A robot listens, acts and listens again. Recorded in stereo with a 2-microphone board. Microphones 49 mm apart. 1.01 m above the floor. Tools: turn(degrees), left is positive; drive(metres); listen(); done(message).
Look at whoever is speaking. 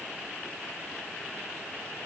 listen()
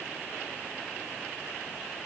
listen()
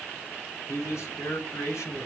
turn(degrees=90)
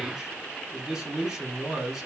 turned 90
turn(degrees=-10)
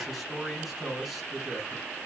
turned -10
done("Facing the man speaking, 2 to 4 m away.")